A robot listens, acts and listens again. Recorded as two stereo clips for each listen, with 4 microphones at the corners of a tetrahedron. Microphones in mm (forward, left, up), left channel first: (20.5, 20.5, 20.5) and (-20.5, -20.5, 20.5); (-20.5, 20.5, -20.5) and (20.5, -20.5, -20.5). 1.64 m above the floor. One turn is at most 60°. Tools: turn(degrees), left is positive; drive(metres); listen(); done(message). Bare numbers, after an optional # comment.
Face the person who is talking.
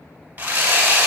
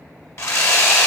listen()
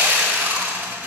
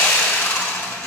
listen()
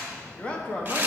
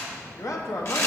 # The man speaking: 115° left.
turn(60)
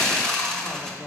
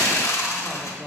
# Nothing new. It was at 55° left.
turn(55)
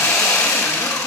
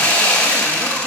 listen()
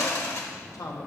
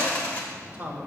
# The man speaking is now 15° left.
turn(15)
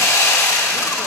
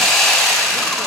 listen()
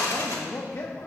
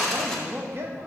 done("Facing the man speaking, 1 to 2 m away.")